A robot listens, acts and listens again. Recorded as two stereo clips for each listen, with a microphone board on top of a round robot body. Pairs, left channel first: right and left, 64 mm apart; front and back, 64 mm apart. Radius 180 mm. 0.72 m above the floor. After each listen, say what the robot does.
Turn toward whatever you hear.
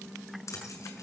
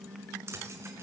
Turn 130° right.
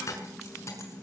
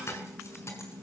Turn 45° right.
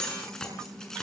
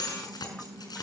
Found it: keys jangling, straight ahead, over 4 m away.